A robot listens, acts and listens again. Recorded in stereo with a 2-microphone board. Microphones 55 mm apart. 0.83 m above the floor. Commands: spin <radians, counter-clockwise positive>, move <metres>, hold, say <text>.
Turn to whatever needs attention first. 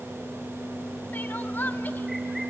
spin 0.61
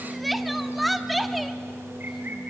say Facing the crying.